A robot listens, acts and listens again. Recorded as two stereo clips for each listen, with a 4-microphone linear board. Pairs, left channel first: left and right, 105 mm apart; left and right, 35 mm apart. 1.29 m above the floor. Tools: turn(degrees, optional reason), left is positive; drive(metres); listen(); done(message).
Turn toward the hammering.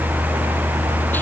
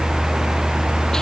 listen()
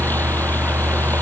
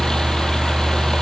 listen()
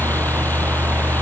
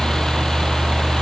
done("I can't make out hammering to turn to.")